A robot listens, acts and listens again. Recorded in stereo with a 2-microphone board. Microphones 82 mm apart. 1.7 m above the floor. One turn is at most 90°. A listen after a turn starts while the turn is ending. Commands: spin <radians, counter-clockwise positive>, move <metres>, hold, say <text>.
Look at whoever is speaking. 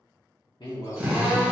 spin 1.13
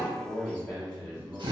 spin 0.17
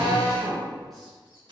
hold
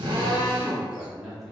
say Found it: a man speaking, straight ahead.